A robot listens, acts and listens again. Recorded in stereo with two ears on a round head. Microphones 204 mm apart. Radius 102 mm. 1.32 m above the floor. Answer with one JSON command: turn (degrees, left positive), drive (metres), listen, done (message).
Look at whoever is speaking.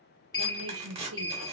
{"turn": -65}
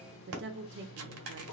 {"turn": -50}
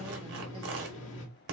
{"listen": true}
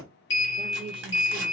{"turn": -20}
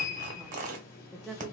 {"done": "Found it: a woman speaking, straight ahead."}